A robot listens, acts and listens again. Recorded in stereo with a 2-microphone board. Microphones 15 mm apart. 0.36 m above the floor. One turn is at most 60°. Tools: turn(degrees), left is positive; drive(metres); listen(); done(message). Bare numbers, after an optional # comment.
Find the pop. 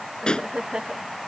turn(60)
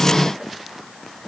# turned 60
# Nothing new. It was at 30° left.
turn(30)
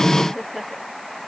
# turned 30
done("Facing where the pop came from. I can't hear it now.")